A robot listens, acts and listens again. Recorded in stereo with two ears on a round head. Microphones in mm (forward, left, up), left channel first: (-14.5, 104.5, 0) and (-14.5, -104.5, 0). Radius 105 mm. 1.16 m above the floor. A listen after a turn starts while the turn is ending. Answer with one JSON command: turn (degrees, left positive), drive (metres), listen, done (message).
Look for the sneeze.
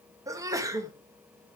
{"turn": -30}
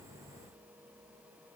{"listen": true}
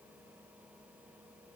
{"done": "I heard a sneeze, but can't make it out now. It was about 15° left or 135° right."}